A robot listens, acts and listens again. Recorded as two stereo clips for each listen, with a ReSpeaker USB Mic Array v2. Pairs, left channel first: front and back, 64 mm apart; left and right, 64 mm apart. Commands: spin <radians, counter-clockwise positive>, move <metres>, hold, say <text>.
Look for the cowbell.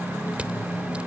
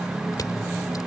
hold
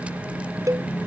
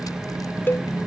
spin 2.53
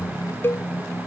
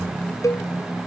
spin 0.96
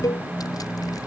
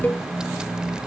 spin 0.44
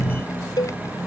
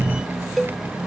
say Facing the cowbell.